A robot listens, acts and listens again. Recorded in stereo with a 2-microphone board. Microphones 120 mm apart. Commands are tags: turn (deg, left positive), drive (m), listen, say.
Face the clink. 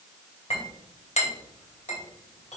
<turn deg="65"/>
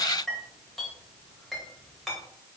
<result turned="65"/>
<say>Found it: a clink, straight ahead.</say>